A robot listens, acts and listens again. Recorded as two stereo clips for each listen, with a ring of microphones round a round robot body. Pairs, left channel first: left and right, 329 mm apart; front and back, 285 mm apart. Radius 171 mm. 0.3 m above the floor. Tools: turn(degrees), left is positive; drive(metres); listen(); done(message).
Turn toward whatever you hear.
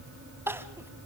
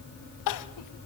done("Found it: crying, straight ahead.")